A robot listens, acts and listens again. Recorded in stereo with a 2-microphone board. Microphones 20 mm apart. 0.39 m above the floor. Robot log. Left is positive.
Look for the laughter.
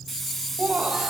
note: The laughter: about 65° right or 115° right.
cmd yaw -65
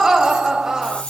note: So it is at 30° right.
cmd yaw -30
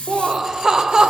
note: The laughter is now 30° right.
cmd yaw -30
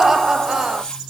note: The laughter is now 25° right.
cmd yaw -25
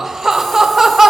note: The laughter is now 15° right.
cmd yaw -15
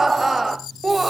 end: Facing the laughter, 1 to 2 m away.